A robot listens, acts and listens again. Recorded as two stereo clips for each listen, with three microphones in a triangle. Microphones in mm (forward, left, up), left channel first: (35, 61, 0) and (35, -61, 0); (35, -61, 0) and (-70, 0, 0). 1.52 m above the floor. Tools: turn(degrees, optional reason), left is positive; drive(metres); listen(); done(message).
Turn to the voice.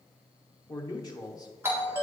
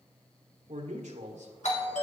turn(degrees=145, reason="The man speaking: 145° left.")
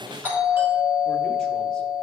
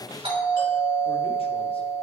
listen()
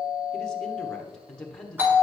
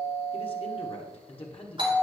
done("Facing the man speaking, 1 to 2 m away.")